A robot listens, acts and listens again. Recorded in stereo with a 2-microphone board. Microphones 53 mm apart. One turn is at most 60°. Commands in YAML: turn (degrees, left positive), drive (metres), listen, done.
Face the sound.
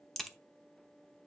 turn: 30
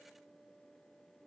listen: true
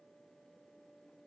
done: "I heard a crack, but can't make it out now. It was about 25° right or 145° left."